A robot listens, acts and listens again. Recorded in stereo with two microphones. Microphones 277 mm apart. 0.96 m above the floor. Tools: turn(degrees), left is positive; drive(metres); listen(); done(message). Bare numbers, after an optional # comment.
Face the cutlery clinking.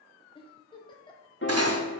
# The cutlery clinking: about 60° right or 120° right.
turn(-60)
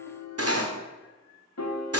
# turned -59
# So it is at 60° right.
turn(-60)
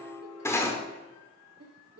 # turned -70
# The cutlery clinking is now 10° left.
turn(10)
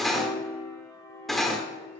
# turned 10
done("Found it: cutlery clinking, straight ahead, 1 to 2 m away.")